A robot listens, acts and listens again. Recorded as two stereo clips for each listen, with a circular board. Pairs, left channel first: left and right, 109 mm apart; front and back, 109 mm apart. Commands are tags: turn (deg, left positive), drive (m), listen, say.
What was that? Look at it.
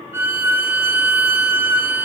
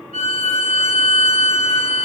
<turn deg="-15"/>
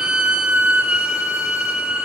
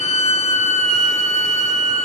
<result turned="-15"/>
<say>Facing the violin.</say>